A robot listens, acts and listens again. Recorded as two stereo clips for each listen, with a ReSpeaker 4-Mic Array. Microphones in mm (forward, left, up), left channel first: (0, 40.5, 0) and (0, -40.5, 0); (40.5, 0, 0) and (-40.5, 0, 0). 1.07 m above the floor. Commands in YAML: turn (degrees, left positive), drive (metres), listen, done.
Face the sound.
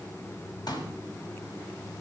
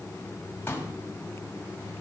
turn: 65
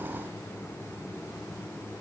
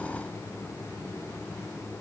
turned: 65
done: "I heard a pop from this way, but can't make it out now."